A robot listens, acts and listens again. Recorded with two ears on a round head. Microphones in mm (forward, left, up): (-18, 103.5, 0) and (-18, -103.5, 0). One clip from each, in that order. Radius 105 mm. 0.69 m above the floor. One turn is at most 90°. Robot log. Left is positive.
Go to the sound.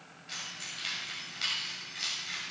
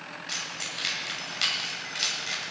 note: The keys jangling: about 25° right or 155° right.
cmd yaw -25
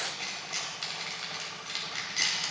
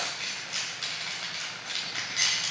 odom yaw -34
cmd fwd 1.0
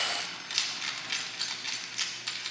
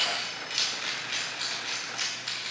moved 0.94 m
note: The keys jangling is now 20° left.
cmd yaw +20
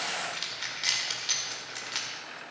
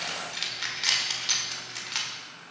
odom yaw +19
cmd fwd 1.0
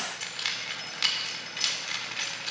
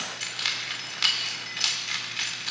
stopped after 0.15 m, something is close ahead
end: Arrived at the keys jangling, straight ahead.